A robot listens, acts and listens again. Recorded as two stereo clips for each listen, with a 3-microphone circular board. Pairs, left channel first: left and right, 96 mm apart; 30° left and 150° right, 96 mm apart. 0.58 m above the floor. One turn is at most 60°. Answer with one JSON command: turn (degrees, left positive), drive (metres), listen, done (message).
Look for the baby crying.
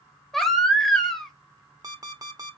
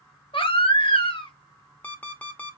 {"done": "Found it: a baby crying, straight ahead, under 1 m away."}